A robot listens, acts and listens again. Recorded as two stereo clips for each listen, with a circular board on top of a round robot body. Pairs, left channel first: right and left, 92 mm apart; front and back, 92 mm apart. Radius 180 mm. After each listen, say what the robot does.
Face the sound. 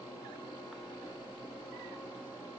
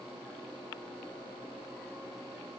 Keep listening.
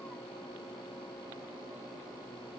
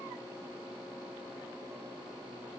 Keep listening.
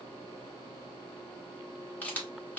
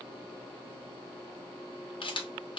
Turn 20° right.
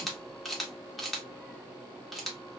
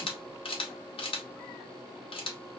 Facing the camera shutter, 1 to 2 m away.